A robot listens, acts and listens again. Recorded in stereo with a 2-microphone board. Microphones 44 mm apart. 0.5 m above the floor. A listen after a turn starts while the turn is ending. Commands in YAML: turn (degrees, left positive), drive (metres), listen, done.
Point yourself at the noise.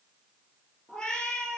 turn: 30
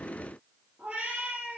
turn: -25
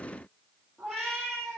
done: "Facing the cat meowing, 2 to 4 m away."